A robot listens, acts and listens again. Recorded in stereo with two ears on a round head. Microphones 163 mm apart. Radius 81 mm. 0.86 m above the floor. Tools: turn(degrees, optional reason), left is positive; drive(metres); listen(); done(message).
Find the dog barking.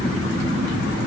listen()
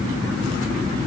listen()
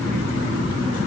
done("I can't make out a dog barking to turn to.")